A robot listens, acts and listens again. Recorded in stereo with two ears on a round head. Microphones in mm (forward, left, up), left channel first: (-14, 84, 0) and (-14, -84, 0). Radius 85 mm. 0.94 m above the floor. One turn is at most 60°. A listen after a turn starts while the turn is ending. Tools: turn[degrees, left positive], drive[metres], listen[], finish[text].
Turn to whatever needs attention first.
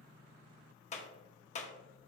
Action: listen[]
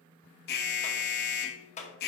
Thought: The alarm: about 60° left or 120° left.
Action: turn[60]
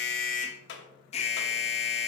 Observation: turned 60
Thought: So it is at 40° left.
Action: turn[40]
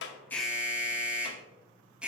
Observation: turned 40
Action: finish[Found it: an alarm, straight ahead.]